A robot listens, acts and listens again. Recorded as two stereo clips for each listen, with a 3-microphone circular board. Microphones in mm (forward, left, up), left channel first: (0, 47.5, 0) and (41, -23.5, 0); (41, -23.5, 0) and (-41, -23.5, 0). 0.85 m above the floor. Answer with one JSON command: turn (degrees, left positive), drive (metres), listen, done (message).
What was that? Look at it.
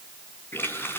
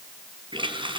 {"turn": 180}
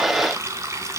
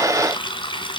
{"done": "Found it: a running tap, straight ahead, over 4 m away."}